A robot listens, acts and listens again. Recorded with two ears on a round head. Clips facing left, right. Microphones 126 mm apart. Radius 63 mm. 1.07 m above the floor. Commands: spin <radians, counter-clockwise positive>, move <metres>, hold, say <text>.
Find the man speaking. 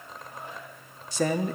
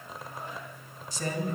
spin 0.96
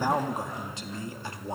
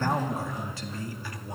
spin 0.44
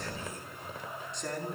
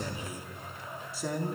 say Facing the man speaking, 2 to 4 m away.